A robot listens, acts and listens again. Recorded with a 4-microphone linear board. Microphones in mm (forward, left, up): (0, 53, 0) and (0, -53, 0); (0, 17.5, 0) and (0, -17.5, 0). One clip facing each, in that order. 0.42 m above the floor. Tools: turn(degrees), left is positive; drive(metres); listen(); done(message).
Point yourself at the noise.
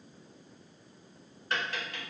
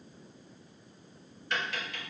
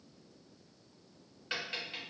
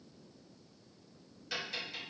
turn(degrees=40)
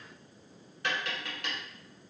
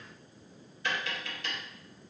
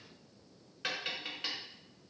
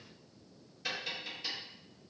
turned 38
turn(degrees=100)
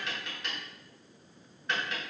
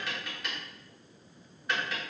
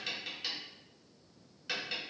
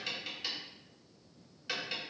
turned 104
done("Found it: tapping, straight ahead.")